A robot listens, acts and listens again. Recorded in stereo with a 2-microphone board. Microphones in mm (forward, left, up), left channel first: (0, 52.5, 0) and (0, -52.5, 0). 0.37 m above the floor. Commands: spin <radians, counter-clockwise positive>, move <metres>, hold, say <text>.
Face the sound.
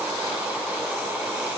hold
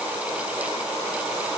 hold
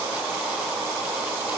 say I can't make out anything.